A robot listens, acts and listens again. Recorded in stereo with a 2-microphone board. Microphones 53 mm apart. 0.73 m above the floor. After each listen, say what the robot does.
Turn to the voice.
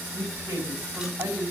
Turn 90° right.
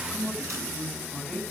Found it: a woman speaking, straight ahead, over 4 m away.